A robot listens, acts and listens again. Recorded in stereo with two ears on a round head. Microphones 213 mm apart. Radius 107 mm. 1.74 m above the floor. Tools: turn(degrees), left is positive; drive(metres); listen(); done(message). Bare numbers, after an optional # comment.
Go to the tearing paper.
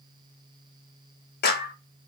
listen()
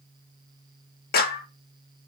listen()
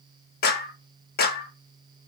done("I can't make out tearing paper, only a clap.")